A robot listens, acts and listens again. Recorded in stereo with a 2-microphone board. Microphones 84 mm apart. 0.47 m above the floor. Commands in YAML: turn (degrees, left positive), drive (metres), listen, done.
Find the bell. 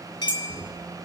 turn: 55
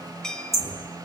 turn: 10
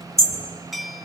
done: "Found it: a bell, straight ahead."